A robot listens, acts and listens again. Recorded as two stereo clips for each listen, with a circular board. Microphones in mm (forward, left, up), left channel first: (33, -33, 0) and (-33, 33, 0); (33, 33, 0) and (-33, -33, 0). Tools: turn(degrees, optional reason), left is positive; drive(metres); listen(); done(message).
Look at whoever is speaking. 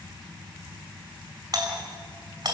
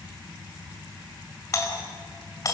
listen()
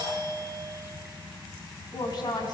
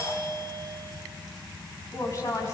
done("Found it: a woman speaking, straight ahead.")